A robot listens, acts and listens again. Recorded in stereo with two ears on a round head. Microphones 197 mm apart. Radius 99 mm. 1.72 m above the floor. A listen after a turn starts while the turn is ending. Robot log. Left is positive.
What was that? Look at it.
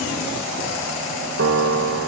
note: The piano: about 65° right or 115° right.
cmd yaw -65
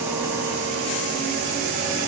cmd idle
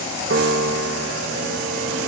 note: So it is at 50° right.
cmd yaw -50
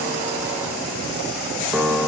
end: Found it: a piano, straight ahead.